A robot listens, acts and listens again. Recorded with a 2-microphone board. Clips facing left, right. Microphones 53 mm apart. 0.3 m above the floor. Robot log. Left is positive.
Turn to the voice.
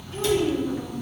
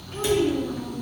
note: The child speaking: about 50° right or 130° right.
cmd yaw -50
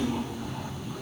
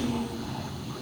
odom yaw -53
cmd idle
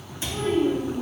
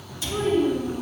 note: So it is at 70° right.
cmd yaw -70
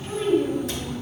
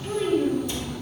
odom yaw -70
end: Facing the child speaking.